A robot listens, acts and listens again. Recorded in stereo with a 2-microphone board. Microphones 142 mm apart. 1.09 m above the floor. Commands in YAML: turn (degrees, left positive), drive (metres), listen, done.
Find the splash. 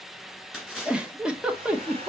turn: -30
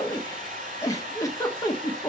listen: true
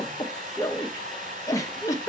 done: "I heard a splash, but can't make it out now. It was about 25° left or 145° right."